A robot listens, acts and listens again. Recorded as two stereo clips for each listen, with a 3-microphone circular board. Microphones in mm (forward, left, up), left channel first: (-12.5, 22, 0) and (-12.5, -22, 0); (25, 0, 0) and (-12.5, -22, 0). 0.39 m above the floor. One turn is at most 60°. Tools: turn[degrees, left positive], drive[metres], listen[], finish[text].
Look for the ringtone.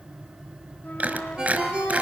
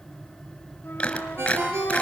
Thought: The ringtone: 155° right.
Action: turn[-60]
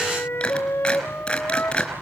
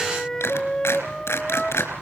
Thought: Nothing new. It was at 95° right.
Action: turn[-60]
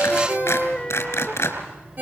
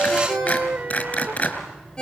Thought: The ringtone is now 40° right.
Action: turn[-40]
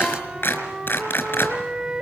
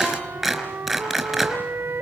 Action: listen[]
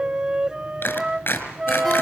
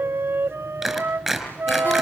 Action: listen[]
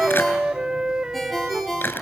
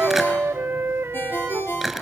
Action: finish[Found it: a ringtone, straight ahead, over 4 m away.]